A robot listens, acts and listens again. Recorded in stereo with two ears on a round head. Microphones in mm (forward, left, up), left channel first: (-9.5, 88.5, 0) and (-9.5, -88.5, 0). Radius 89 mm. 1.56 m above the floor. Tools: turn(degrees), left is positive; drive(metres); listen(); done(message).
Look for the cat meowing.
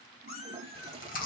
turn(degrees=55)
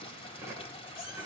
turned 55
listen()
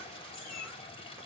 turn(degrees=45)
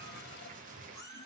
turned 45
turn(degrees=15)
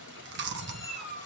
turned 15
done("Facing the cat meowing.")